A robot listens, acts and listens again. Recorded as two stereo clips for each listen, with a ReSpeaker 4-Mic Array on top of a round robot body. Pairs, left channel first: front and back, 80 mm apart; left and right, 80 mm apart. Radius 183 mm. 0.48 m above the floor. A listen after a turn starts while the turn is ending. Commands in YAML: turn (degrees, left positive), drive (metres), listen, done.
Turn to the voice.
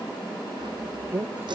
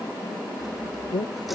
turn: 120
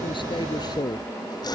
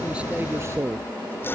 turn: -35
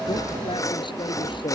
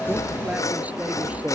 turn: -20
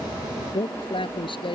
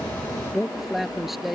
done: "Found it: a man speaking, straight ahead."